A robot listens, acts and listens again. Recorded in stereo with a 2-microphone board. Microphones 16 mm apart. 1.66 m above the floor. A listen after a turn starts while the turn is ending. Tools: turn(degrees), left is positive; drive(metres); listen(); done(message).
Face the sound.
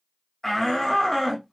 turn(degrees=25)
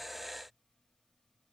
listen()
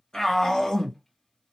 turn(degrees=130)
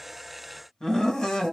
turn(degrees=60)
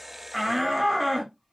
done("Facing the shout, 1 to 2 m away.")